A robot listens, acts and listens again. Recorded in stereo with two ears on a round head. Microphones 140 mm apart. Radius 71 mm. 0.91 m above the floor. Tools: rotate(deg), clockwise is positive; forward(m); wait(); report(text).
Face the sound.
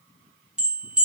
rotate(30)
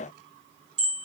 rotate(145)
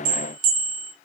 rotate(60)
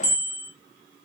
rotate(10)
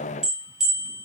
report("Facing the bell.")